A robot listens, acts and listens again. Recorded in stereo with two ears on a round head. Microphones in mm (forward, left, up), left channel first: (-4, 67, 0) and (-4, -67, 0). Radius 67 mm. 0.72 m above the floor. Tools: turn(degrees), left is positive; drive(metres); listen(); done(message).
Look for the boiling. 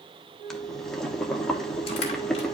turn(degrees=30)
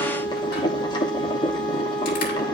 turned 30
turn(degrees=145)
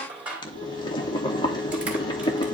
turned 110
turn(degrees=35)
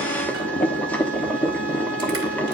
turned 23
turn(degrees=10)
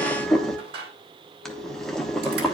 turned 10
done("Found it: boiling, straight ahead.")